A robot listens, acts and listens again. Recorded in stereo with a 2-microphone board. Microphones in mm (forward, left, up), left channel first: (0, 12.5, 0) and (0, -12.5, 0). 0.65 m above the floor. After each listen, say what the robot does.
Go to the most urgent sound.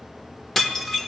Keep listening.
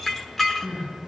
Turn 45° left.
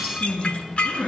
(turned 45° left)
Turn 90° left.
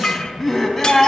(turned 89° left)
Drive 1.0 m forward.
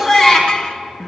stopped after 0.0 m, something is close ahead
Something is in my way. I am facing the crying but have not reached it.